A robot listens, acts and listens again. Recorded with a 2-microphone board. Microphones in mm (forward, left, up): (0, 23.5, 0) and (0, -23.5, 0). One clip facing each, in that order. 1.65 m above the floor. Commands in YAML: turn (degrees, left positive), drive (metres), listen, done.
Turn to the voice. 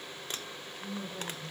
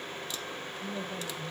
turn: -60
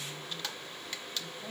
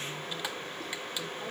listen: true
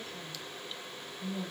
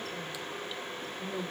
turn: -65
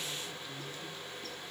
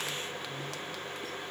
listen: true
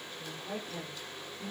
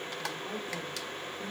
done: "Found it: a woman speaking, straight ahead."